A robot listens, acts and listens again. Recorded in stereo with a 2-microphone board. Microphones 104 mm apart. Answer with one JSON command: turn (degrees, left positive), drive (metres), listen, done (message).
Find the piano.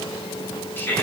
{"listen": true}
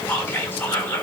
{"listen": true}
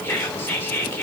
{"done": "I can't make out a piano to turn to."}